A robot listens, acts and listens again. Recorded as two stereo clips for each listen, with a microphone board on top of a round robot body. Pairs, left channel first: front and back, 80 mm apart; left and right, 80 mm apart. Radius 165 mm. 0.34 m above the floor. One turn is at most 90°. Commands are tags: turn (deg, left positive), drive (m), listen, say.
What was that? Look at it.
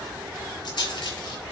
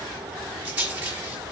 <turn deg="-20"/>
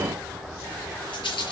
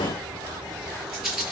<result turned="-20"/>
<say>Facing the rattle, over 4 m away.</say>